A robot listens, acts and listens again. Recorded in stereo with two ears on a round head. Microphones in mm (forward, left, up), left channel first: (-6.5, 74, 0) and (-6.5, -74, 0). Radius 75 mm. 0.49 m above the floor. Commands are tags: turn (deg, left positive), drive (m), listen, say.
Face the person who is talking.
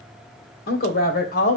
<turn deg="55"/>
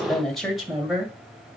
<say>Found it: a woman speaking, straight ahead, 2 to 4 m away.</say>